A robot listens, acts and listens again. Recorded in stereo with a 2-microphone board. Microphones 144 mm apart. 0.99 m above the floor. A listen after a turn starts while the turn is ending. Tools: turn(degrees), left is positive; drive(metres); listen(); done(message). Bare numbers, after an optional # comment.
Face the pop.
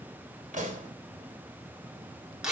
# The pop: about 65° right or 115° right.
turn(-65)
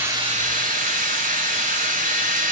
listen()
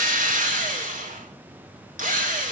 done("I heard a pop, but can't make it out now. It was about straight ahead or 50° right.")